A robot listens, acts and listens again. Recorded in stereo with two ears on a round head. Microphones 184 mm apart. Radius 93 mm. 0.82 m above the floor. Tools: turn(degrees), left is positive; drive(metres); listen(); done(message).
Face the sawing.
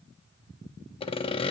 turn(degrees=30)
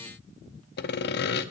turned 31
turn(degrees=120)
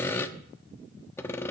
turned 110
turn(degrees=10)
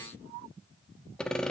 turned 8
done("Found it: sawing, straight ahead.")